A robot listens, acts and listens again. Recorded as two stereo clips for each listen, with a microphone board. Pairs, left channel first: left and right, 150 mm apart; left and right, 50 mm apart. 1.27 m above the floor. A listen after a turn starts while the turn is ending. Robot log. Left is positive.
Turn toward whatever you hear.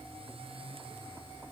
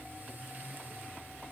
cmd idle
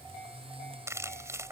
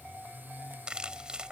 note: The crumpling: about 20° right or 160° right.
cmd yaw -20
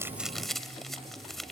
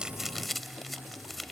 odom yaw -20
end: Facing the crumpling.